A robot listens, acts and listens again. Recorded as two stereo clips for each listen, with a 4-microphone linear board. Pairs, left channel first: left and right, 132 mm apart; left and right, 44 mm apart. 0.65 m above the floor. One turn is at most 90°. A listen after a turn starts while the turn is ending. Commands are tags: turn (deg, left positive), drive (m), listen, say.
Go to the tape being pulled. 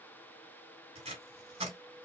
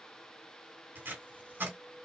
<turn deg="-50"/>
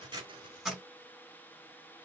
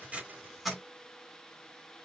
<drive m="1.0"/>
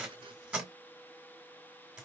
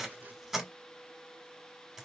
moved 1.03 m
<turn deg="-10"/>
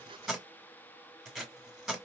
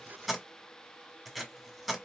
<drive m="1.0"/>
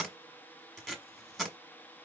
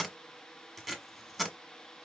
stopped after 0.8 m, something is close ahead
<say>I am next to the tape being pulled.</say>